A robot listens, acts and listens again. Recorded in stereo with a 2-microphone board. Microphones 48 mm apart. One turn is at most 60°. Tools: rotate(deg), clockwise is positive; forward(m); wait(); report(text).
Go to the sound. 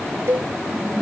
rotate(60)
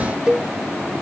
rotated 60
rotate(20)
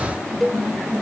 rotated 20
forward(1.0)
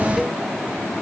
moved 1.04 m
wait()
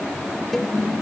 wait()
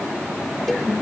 report("Facing where the cowbell came from. I can't hear it now. I did not reach it.")